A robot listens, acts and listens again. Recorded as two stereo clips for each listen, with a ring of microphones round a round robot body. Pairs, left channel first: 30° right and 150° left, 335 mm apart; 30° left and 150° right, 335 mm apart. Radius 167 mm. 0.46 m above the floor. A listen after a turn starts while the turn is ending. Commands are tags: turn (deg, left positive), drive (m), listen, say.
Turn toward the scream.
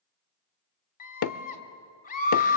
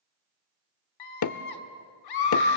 <turn deg="35"/>
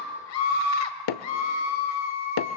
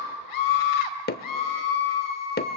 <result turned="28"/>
<say>Found it: a scream, straight ahead.</say>